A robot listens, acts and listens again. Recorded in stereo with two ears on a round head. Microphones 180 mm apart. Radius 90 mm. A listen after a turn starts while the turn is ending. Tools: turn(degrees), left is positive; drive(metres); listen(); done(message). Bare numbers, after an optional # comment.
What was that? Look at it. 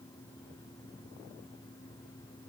listen()
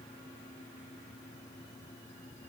listen()
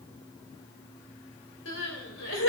# The crying: about 65° left or 115° left.
turn(65)
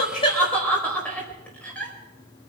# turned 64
done("Found it: crying, straight ahead, 2 to 4 m away.")